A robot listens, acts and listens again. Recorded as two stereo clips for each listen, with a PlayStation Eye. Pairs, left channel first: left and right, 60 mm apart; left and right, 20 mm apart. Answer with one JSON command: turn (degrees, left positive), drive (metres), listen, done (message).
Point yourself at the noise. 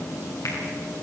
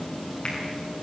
{"turn": 70}
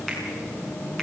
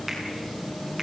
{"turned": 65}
{"done": "Found it: a finger snap, straight ahead."}